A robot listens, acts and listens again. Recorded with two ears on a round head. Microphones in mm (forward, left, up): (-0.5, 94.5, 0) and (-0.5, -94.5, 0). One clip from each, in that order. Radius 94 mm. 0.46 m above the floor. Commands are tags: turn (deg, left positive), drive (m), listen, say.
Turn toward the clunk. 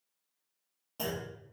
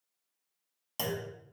<turn deg="-60"/>
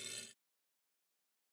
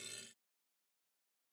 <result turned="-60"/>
<listen/>
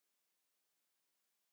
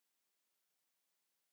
<say>I heard a clunk, but can't make it out now. It was about straight ahead or 60° right.</say>